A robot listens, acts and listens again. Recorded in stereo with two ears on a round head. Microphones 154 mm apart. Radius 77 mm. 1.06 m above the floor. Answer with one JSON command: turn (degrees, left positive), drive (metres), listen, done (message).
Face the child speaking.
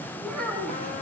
{"turn": 30}
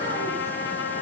{"listen": true}
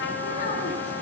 {"listen": true}
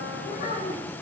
{"turn": 135}
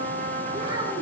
{"turn": -30}
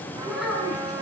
{"done": "Found it: a child speaking, straight ahead, over 4 m away."}